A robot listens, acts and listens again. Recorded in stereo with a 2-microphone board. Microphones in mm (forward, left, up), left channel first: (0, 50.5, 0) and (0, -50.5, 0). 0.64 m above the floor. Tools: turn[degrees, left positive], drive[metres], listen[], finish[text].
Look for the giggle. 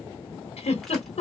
Action: turn[90]
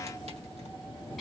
Action: listen[]
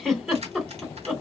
Action: finish[Found it: a giggle, straight ahead.]